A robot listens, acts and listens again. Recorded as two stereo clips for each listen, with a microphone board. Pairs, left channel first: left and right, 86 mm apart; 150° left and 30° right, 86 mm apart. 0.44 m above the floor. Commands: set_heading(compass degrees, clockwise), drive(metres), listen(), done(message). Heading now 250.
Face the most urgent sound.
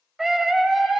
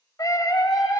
set_heading(65)
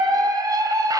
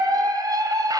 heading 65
set_heading(125)
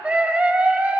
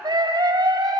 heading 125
set_heading(145)
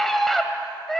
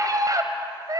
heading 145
done("Facing the scream.")